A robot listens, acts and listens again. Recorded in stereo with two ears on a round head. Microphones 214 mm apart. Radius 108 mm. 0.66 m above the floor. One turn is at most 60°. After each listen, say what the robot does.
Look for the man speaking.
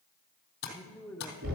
Turn 30° left.
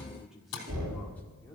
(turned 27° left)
Turn 30° left.
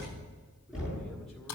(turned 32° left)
Keep listening.
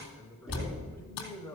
Turn 30° left.
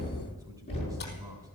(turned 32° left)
Keep listening.
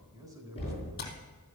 Turn 15° right.
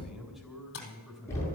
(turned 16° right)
Found it: a man speaking, straight ahead.